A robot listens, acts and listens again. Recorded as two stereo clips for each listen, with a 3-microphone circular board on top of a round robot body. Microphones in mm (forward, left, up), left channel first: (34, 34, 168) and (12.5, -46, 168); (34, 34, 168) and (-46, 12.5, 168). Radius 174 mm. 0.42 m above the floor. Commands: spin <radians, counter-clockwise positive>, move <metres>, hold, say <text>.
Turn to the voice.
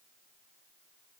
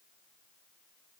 hold
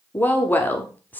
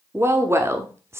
spin 2.44
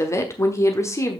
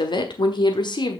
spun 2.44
spin 0.44
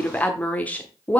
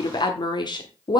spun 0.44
say Found it: a woman speaking, straight ahead.